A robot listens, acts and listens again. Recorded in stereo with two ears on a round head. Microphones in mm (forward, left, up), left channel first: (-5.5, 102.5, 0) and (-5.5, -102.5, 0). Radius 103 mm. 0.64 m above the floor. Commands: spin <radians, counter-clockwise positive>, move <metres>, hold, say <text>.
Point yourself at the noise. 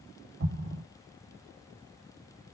spin -0.79
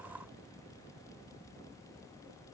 hold
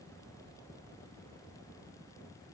say I heard an explosion, but can't make it out now. It was about straight ahead or 90° right.